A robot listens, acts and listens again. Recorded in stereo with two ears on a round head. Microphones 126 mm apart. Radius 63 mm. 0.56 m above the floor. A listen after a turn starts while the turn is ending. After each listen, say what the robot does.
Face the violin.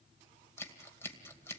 Keep listening.
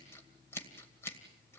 Keep listening.
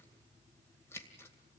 I can't make out a violin, only scissors.